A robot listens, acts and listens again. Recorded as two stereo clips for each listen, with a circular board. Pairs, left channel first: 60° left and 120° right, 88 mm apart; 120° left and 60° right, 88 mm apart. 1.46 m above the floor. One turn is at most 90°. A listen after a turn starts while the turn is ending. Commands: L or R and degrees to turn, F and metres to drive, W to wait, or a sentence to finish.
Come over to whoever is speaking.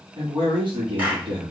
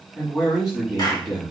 R90
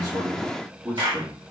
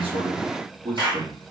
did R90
R50
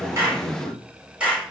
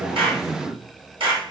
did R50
F1.0
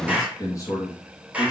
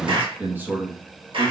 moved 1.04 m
L10
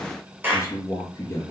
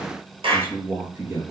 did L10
F1.0
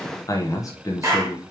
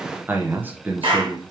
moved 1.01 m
L10
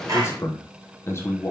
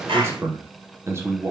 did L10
F1.0
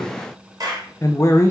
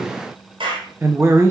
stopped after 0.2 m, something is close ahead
Arrived at the man speaking, straight ahead.